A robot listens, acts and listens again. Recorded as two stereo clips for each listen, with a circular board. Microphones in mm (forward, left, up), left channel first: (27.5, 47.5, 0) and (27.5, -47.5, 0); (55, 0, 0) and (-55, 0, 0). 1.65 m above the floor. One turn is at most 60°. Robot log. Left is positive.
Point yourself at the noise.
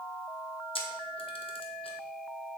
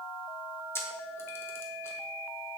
note: The camera shutter: 70° left.
cmd yaw +60
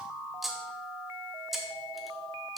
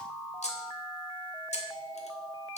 end: Found it: a camera shutter, straight ahead, 1 to 2 m away.